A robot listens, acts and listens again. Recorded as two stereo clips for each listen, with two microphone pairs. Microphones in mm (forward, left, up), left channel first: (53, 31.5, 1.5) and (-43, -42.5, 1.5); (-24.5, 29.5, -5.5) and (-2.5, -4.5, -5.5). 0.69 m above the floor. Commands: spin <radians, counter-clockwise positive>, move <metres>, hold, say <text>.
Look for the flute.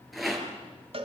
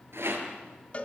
hold
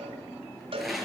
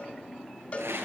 hold
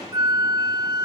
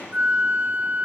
spin -1.75
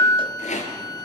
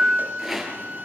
spin -0.26
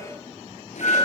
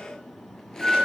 say Found it: a flute, straight ahead.